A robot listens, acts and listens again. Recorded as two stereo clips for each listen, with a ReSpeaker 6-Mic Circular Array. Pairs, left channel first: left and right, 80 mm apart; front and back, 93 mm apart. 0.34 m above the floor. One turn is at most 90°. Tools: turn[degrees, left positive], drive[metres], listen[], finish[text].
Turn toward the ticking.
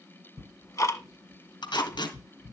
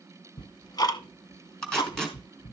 Thought: The ticking: 40° left.
Action: turn[40]
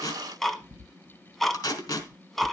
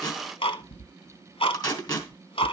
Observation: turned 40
Action: finish[Facing the ticking, under 1 m away.]